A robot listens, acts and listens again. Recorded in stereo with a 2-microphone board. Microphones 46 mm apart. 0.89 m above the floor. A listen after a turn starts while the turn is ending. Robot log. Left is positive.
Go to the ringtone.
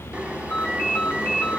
note: The ringtone: about 50° left or 130° left.
cmd yaw +50
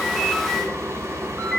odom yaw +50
cmd fwd 1.0
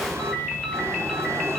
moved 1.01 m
cmd fwd 1.0
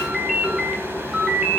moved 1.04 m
note: The ringtone is now 10° right.
cmd yaw -10
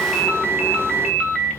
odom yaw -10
cmd fwd 1.0
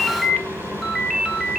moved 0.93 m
cmd fwd 1.0
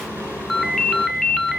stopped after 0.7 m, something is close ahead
end: Arrived at the ringtone, straight ahead.